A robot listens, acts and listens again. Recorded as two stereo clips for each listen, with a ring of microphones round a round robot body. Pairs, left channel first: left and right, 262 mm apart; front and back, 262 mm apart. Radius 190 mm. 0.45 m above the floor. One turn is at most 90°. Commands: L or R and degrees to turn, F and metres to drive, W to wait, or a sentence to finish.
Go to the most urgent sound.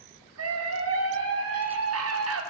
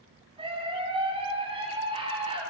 R90
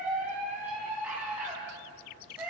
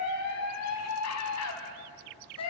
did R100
F1.0
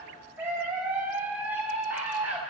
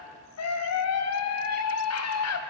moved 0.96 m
F1.0
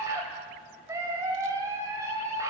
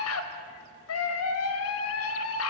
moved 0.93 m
R10
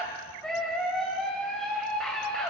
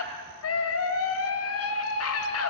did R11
F1.0
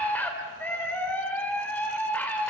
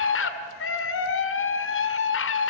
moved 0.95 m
F1.0
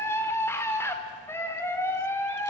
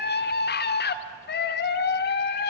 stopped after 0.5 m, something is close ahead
L15
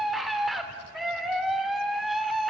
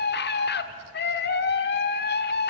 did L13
I am next to the scream.